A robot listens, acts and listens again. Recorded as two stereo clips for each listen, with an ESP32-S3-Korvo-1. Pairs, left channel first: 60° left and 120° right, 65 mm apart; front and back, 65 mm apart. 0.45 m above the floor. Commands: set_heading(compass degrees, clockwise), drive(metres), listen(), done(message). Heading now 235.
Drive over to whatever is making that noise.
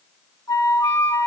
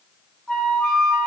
set_heading(160)
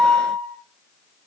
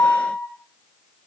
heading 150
set_heading(160)
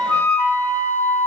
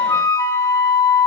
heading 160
drive(1.0)
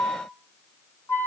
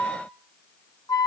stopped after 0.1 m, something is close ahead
done("Something is in my way. I am facing the flute but have not reached it.")